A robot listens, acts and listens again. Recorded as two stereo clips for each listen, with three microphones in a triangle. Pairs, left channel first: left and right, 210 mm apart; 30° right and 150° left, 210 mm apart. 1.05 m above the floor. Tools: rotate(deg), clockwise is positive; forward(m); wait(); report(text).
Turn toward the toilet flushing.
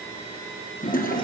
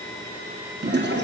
rotate(-130)
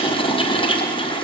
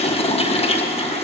rotate(-25)
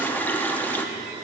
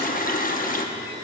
rotate(-10)
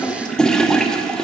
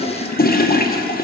report("Facing the toilet flushing, under 1 m away.")